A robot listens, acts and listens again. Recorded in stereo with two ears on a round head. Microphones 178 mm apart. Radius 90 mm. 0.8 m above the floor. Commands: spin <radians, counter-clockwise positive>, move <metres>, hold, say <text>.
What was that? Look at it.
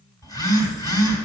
spin 0.35
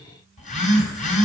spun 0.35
spin 2.44
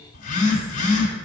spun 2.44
spin 0.70
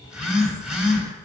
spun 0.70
say Facing the phone buzzing.